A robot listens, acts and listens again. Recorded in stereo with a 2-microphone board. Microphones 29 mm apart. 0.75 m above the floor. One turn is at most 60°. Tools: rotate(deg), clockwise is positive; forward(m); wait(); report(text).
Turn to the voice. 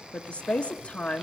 rotate(-45)
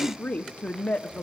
rotate(-60)
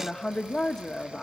rotate(-25)
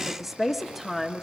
report("Facing the woman speaking.")